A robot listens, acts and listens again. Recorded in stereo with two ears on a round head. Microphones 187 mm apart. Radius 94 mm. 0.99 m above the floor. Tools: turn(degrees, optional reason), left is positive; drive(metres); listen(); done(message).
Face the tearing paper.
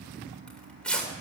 turn(degrees=30)
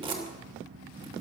turn(degrees=-25, reason="So it is at 25° right.")
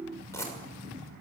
turn(degrees=15, reason="The tearing paper is now 15° left.")
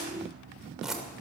done("Found it: tearing paper, straight ahead.")